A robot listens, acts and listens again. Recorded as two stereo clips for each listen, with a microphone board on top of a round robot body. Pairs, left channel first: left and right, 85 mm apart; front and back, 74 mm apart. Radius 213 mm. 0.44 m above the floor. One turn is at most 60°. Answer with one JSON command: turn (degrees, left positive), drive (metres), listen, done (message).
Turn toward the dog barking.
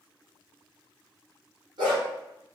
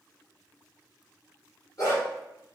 {"turn": -45}
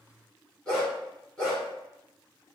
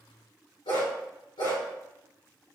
{"turn": 10}
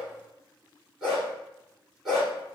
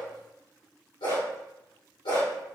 {"done": "Facing the dog barking, 1 to 2 m away."}